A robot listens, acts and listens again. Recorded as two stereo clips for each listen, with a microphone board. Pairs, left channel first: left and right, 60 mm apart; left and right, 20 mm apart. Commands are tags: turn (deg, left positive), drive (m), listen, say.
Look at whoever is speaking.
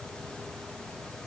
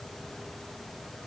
<listen/>
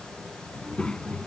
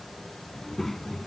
<turn deg="15"/>
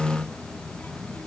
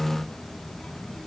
<turn deg="30"/>
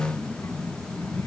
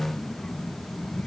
<turn deg="125"/>
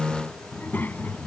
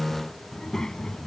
<turn deg="35"/>
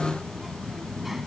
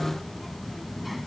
<say>Found it: a child speaking, straight ahead.</say>